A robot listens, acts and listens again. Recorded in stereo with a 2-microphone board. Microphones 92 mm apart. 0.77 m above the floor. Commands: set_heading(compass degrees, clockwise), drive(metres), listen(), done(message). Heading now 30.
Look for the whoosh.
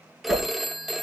set_heading(60)
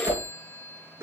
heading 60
set_heading(210)
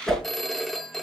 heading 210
done("Facing the whoosh, 2 to 4 m away.")